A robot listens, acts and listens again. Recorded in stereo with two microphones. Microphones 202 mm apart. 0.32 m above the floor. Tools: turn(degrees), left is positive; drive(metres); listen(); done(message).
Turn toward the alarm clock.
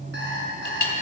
turn(degrees=-60)
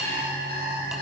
turn(degrees=-50)
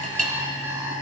turn(degrees=-15)
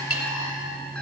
listen()
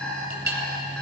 done("Facing the alarm clock, 2 to 4 m away.")